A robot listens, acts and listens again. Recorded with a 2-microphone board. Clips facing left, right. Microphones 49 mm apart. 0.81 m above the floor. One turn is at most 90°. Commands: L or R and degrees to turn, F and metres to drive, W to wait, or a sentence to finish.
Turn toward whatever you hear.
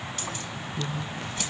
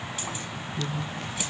R30
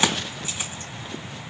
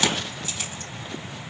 L25
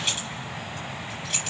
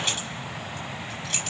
Facing the keys jangling.